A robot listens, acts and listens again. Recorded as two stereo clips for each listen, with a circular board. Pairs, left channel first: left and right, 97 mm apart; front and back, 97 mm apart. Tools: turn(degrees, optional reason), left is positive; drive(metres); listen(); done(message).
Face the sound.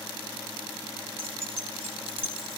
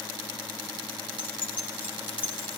turn(degrees=-70, reason="The keys jangling: 70° right.")
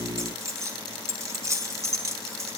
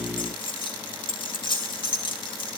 turn(degrees=-30, reason="The keys jangling is now 30° right.")
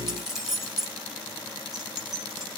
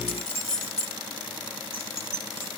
done("Facing the keys jangling.")